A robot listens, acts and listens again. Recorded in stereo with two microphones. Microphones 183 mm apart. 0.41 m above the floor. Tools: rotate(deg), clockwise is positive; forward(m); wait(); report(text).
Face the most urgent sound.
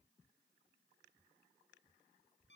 wait()
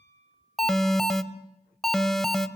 rotate(-30)
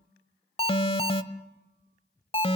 rotate(-145)
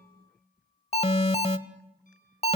rotate(-40)
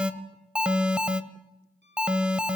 report("Facing the alarm, 1 to 2 m away.")